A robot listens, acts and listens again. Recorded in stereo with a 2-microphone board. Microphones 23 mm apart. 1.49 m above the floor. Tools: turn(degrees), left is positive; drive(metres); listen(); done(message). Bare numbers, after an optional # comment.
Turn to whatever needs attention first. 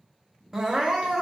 turn(-30)
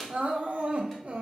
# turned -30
# So it is at 135° right.
turn(-135)
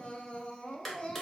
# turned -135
# The crying is now 35° left.
turn(35)
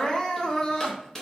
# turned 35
# The crying is now 15° left.
turn(15)
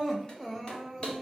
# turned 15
done("Facing the crying, under 1 m away.")